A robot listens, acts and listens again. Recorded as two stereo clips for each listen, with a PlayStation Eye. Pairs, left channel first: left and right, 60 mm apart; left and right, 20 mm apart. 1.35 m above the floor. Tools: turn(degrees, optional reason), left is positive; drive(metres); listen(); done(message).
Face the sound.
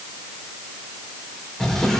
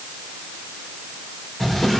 turn(degrees=30)
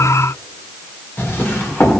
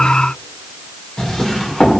turn(degrees=140, reason="So it is at 140° left.")
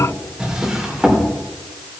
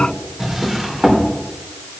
turn(degrees=-15, reason="The drawer is now 15° right.")
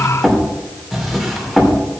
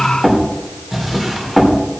done("Found it: a drawer, straight ahead.")